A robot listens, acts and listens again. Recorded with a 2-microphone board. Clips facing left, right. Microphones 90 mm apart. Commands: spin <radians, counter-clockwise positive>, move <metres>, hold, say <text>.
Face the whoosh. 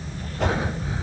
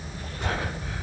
spin 1.57
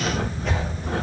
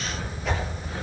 say Found it: a whoosh, straight ahead, over 4 m away.